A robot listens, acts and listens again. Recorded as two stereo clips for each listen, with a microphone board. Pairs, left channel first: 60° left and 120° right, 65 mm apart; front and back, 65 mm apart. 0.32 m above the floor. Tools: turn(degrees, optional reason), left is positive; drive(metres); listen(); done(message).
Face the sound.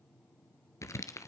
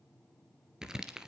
turn(degrees=100, reason="The crumpling: 100° left.")
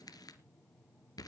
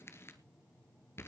turn(degrees=50, reason="The crumpling is now 50° left.")
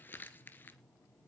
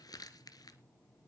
done("Found it: crumpling, straight ahead.")